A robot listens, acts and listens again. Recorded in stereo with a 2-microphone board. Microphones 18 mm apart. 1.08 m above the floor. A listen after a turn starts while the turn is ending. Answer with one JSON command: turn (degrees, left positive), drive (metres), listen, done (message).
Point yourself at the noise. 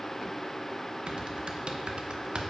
{"turn": -65}
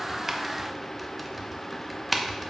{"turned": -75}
{"done": "Facing the typing on a keyboard, under 1 m away."}